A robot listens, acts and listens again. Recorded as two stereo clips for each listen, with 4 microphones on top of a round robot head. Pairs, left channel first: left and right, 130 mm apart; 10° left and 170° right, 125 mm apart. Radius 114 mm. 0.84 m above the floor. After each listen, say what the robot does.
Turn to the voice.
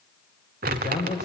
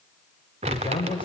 Turn 60° left.
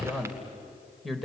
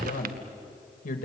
Found it: a man speaking, straight ahead.